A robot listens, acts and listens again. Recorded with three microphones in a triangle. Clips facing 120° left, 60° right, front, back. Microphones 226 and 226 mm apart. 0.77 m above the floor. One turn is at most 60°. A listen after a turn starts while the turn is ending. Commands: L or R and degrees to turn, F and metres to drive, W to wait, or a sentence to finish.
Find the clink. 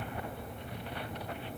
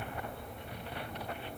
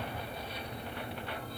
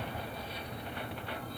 W
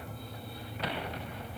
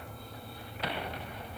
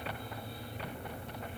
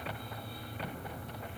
W
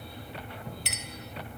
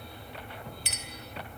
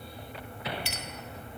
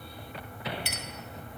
L60
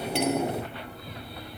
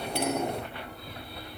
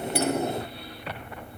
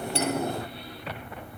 L60
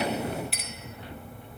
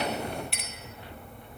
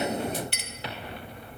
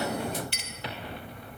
L30
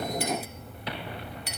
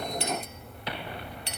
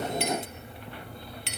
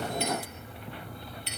Found it: a clink, straight ahead, 2 to 4 m away.